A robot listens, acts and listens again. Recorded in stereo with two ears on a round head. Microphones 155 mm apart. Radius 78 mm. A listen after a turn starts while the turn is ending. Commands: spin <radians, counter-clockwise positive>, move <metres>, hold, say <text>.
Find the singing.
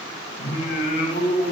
spin 1.57
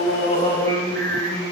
spin 0.26
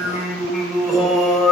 say Found it: singing, straight ahead, 2 to 4 m away.